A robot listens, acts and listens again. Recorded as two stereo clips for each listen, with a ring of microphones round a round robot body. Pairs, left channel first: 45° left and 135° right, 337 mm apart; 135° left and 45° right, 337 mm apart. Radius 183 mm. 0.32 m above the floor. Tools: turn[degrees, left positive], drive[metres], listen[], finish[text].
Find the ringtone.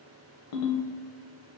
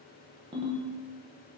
Thought: The ringtone: 30° left.
Action: turn[30]
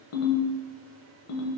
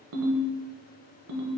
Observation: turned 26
Action: finish[Found it: a ringtone, straight ahead.]